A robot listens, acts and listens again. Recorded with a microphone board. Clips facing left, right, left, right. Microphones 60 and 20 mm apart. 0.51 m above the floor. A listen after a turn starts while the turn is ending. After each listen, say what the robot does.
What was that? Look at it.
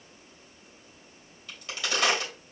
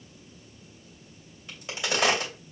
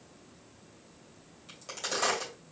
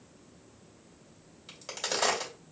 Turn 20° right.
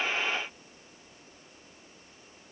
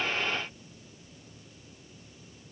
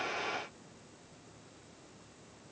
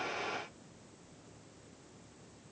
Keep listening.
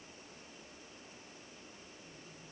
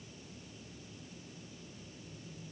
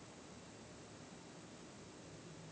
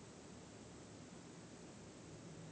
I heard a crack, but can't make it out now. It was about straight ahead or 140° right.